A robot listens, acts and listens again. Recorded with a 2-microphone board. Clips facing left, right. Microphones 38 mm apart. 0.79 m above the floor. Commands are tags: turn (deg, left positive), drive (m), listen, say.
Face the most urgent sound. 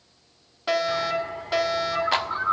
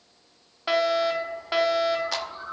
<turn deg="-15"/>
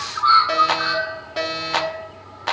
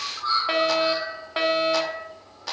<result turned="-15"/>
<turn deg="-150"/>
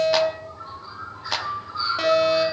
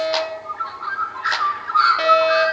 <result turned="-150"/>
<turn deg="-20"/>
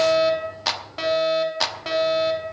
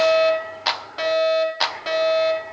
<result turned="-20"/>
<say>Facing the fire alarm, 2 to 4 m away.</say>